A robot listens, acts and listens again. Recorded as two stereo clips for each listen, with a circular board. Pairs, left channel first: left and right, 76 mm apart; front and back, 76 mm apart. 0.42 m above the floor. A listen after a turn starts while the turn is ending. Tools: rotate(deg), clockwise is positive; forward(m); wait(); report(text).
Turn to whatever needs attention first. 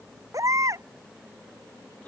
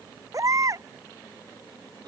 rotate(135)
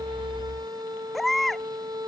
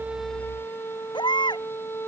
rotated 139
report("Found it: a baby crying, straight ahead.")